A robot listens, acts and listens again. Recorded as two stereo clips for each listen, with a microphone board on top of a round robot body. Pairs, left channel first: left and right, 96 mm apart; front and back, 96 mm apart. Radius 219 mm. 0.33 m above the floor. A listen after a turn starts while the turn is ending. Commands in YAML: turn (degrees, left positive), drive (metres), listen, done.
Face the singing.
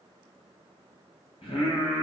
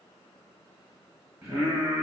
turn: 125
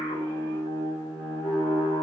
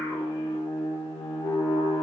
done: "Found it: singing, straight ahead."